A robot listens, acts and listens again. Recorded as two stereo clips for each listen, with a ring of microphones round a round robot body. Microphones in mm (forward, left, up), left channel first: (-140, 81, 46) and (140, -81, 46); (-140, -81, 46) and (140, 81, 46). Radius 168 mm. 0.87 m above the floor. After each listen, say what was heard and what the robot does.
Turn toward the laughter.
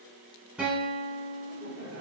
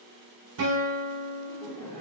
The laughter: 65° right. Turn 65° right.
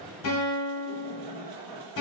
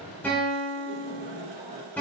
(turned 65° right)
The laughter is now 35° right. Turn 35° right.
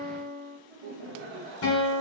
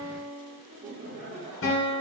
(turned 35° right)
The laughter is now 40° right. Turn 40° right.
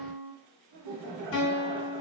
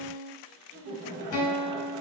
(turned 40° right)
The laughter is now 10° right. Turn 10° right.
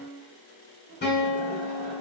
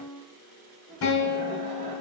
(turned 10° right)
Facing the laughter, 1 to 2 m away.